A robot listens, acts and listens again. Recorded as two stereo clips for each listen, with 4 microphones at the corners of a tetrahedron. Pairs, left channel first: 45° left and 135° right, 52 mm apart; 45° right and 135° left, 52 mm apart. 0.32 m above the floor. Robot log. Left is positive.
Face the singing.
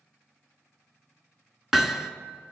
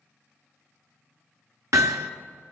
cmd idle
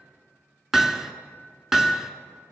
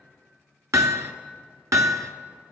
cmd idle
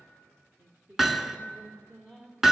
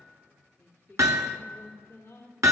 note: The singing: 85° right.
cmd yaw -85
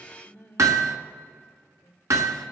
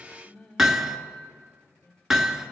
end: Found it: singing, straight ahead, 2 to 4 m away.